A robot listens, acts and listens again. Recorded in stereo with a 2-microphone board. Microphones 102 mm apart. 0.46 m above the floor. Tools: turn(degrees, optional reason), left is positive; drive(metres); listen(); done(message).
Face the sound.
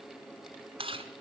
turn(degrees=-65, reason="The chewing: about 65° right or 115° right.")
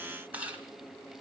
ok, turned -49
turn(degrees=-15, reason="So it is at 15° right.")
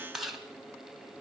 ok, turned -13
done("Found it: chewing, straight ahead, 1 to 2 m away.")